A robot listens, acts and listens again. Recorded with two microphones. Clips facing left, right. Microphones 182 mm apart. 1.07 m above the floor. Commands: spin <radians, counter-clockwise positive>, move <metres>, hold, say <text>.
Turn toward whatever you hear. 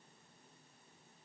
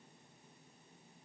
hold
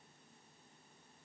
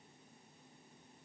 hold
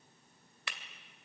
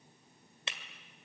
spin -0.44
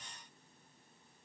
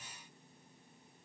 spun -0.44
hold
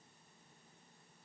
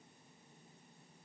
say I heard breaking glass, but can't make it out now. It was about straight ahead or 130° right.